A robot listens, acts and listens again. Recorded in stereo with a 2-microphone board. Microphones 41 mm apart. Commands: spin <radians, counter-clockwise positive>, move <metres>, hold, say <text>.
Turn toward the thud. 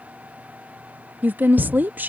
spin -0.79
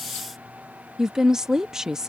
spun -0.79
hold
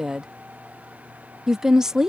say I heard a thud, but can't make it out now. It was about straight ahead or 90° right.